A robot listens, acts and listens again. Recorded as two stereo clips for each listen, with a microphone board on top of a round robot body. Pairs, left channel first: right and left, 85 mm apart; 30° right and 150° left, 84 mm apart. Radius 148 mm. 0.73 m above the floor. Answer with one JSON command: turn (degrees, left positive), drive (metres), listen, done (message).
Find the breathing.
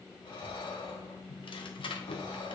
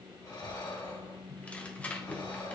{"turn": -75}
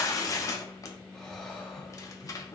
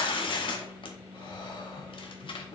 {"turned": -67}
{"turn": -10}
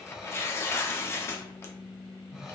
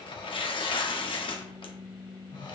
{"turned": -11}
{"done": "Found it: breathing, straight ahead."}